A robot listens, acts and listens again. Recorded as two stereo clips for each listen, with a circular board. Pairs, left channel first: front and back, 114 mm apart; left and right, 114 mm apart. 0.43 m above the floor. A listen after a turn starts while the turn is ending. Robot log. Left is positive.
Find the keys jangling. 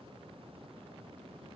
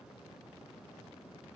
cmd idle
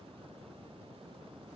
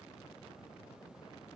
cmd idle
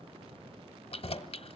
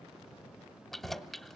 end: Found it: keys jangling, straight ahead, 1 to 2 m away.